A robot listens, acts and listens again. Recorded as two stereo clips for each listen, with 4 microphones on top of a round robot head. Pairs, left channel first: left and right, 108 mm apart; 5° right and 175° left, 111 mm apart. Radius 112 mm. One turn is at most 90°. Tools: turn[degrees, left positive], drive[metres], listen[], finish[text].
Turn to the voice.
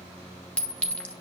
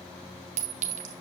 Action: listen[]
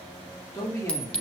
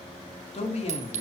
Thought: The man speaking: 20° left.
Action: turn[20]
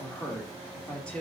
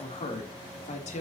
Thought: The man speaking is now 10° left.
Action: turn[10]
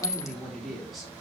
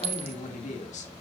Action: finish[Found it: a man speaking, straight ahead.]